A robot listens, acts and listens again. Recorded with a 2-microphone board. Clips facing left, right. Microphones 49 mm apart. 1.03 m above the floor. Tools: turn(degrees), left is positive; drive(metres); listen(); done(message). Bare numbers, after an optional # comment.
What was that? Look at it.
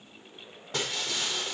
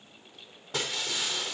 turn(30)
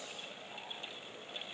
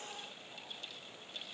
listen()
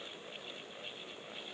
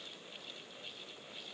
done("I heard breaking glass, but can't make it out now. It was about 30° right or 150° left.")